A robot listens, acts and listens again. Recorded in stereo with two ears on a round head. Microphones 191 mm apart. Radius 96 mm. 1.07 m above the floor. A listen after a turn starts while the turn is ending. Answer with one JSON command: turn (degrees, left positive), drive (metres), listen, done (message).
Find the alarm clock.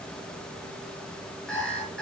{"turn": 30}
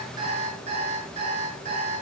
{"turn": -30}
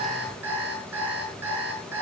{"turn": -10}
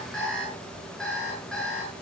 {"done": "Facing the alarm clock, over 4 m away."}